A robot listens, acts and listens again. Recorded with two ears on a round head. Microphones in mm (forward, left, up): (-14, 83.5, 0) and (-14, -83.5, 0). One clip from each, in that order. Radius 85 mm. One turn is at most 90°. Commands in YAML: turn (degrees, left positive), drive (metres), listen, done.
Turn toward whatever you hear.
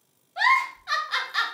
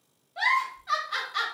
turn: 25
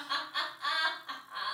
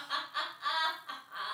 done: "Found it: a giggle, straight ahead."